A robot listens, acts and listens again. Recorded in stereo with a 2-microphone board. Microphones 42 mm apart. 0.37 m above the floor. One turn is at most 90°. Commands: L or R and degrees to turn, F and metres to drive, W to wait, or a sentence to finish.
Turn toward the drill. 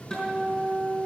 W
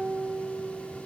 W
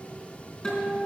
I can't make out a drill, only a guitar.